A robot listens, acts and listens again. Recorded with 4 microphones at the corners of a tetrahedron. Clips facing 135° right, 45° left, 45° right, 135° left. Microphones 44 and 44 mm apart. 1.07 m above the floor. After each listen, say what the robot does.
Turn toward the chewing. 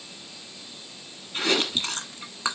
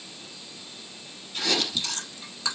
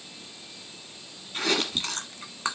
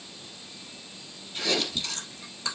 Turn 80° right.
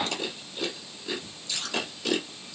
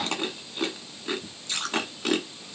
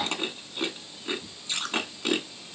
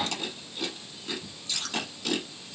Turn 10° left.
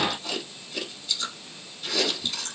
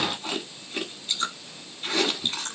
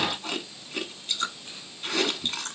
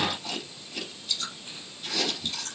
Found it: chewing, straight ahead.